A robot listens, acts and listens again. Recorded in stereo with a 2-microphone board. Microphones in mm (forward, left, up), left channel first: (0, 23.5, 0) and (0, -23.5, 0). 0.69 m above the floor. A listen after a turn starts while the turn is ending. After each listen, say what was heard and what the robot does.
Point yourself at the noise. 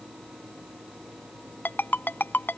The ringtone: about 45° left or 135° left. Turn 45° left.
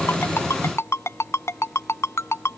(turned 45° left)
So it is at 90° left. Turn 90° left.
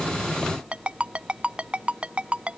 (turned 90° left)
The ringtone is now 25° right. Turn 25° right.
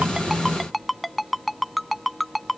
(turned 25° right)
Found it: a ringtone, straight ahead.